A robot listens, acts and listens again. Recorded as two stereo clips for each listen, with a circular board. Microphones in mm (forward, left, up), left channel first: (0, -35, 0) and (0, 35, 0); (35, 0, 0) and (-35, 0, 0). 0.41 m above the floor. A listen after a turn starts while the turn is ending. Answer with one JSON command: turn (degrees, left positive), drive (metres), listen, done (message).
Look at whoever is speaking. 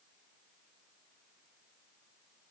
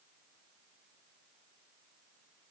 {"listen": true}
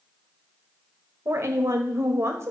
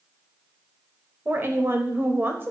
{"turn": 130}
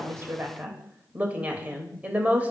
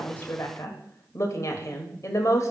{"turn": 25}
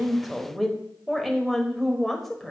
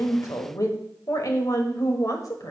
{"done": "Found it: a woman speaking, straight ahead, 1 to 2 m away."}